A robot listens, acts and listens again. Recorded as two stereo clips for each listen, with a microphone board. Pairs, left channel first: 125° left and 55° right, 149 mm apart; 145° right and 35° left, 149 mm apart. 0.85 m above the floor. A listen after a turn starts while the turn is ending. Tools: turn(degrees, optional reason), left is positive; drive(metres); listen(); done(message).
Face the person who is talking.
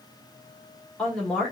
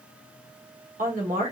turn(degrees=40, reason="The woman speaking: 40° left.")
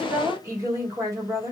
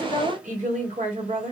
turn(degrees=15, reason="The woman speaking is now 15° left.")
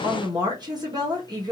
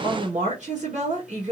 done("Facing the woman speaking.")